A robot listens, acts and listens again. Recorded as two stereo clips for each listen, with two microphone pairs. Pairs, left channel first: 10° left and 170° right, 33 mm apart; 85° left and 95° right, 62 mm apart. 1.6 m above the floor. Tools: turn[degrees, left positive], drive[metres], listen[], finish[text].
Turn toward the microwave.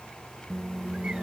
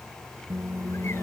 Thought: The microwave: 70° right.
Action: turn[-70]
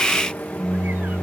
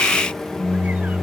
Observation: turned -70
Action: finish[Found it: a microwave, straight ahead.]